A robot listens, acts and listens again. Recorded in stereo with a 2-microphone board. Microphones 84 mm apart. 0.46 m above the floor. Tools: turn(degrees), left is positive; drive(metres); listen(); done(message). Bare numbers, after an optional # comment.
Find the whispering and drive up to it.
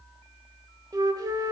listen()
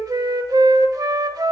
listen()
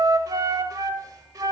done("I can't make out whispering, only a flute.")